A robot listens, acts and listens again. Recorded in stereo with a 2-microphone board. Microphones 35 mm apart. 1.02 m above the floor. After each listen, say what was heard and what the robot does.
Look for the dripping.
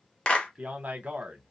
Keep listening.
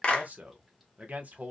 Keep listening.
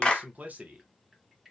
Turn 30° right.
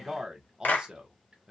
Keep listening.
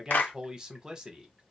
So it is at 145° right. Turn 145° right.
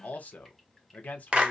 Keep listening.
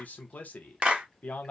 Keep listening.
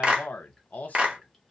I heard dripping from this way, but can't make it out now.